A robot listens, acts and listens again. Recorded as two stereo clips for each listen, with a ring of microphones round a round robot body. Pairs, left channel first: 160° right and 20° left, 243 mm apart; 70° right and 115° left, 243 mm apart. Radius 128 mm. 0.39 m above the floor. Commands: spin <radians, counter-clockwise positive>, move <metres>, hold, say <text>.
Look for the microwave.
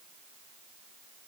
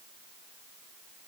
hold
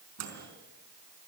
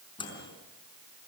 say Facing the microwave.